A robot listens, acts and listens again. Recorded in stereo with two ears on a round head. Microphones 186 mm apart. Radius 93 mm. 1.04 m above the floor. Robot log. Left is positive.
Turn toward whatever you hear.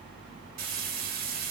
note: The frying: about 45° right or 135° right.
cmd yaw -45
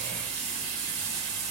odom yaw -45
note: So it is at 90° right.
cmd yaw -90
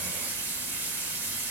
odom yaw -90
note: The frying is now 10° right.
cmd yaw -10
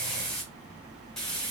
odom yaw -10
end: Facing the frying.